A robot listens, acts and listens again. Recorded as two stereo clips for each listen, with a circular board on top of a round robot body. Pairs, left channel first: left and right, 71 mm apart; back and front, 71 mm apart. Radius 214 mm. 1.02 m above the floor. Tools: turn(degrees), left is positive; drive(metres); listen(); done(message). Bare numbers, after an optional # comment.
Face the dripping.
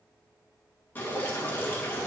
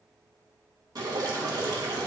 # The dripping: 25° left.
turn(25)
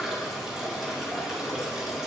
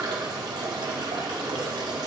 done("Facing the dripping.")